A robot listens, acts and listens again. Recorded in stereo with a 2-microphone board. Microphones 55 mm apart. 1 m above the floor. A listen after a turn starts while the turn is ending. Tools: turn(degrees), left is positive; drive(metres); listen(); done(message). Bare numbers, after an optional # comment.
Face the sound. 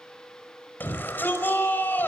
# The shout: about 40° left or 140° left.
turn(40)
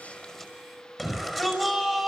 done("Found it: a shout, straight ahead, over 4 m away.")